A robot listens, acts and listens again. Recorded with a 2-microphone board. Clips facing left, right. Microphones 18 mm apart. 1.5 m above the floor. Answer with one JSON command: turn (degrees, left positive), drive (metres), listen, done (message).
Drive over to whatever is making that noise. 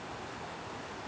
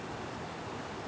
{"listen": true}
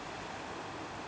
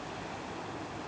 {"listen": true}
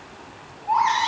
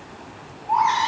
{"turn": 60}
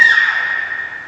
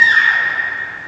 {"turn": 20}
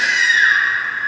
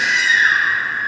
{"drive": 1.0}
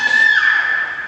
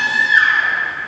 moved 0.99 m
{"drive": 1.0}
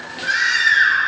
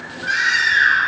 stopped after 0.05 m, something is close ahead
{"turn": 10}
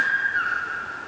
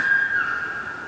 {"done": "I am next to the baby crying."}